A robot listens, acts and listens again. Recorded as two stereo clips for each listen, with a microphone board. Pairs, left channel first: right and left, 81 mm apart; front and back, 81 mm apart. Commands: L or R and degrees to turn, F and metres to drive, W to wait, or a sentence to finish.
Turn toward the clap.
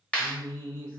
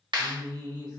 R165
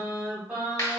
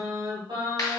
R40
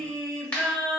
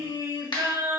R15
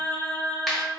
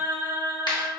Facing the clap.